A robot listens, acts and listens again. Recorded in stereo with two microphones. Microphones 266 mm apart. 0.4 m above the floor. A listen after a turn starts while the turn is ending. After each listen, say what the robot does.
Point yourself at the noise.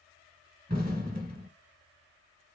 Turn 30° right.
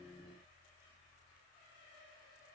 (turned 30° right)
Keep listening.
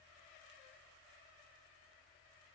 I heard an explosion, but can't make it out now. It was about straight ahead or 120° right.